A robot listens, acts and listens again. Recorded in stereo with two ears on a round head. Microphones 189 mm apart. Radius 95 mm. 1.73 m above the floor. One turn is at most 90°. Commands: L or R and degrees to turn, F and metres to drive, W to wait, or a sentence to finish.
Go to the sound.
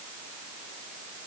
W
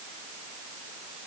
W
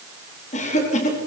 L35
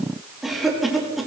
F1.0
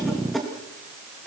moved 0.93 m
F1.0
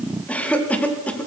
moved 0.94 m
F1.0
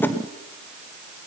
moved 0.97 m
W
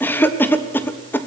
L10
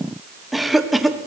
F1.0
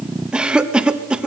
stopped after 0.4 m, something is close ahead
I am next to the cough.